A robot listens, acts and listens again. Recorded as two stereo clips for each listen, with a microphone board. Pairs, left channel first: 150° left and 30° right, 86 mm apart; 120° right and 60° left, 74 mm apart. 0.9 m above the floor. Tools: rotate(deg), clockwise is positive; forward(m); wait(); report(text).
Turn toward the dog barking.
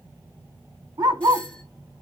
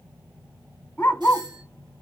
rotate(55)
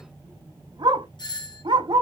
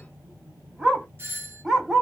rotate(25)
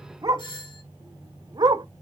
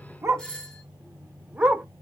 rotate(10)
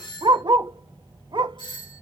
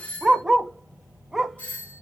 rotate(25)
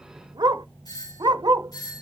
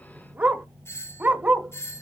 report("Found it: a dog barking, straight ahead, 1 to 2 m away.")